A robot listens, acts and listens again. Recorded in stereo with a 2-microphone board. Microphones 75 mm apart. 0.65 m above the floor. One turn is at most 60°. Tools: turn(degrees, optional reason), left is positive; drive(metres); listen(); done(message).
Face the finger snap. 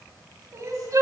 listen()
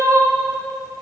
listen()
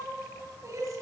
done("I can't make out a finger snap, only crying.")